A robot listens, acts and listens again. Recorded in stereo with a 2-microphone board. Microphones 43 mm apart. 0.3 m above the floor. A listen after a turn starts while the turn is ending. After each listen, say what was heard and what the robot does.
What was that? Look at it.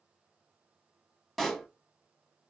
Turn 30° left.
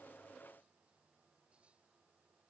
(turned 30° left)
Keep listening.
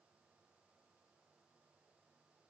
I heard a pop, but can't make it out now. It was about 25° right or 145° left.